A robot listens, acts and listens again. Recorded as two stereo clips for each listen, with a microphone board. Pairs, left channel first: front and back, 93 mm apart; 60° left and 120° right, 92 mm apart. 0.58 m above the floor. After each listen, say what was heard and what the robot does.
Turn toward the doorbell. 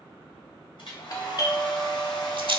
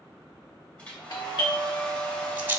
The doorbell: 35° left. Turn 35° left.
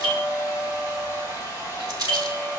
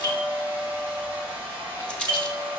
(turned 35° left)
Found it: a doorbell, straight ahead, 1 to 2 m away.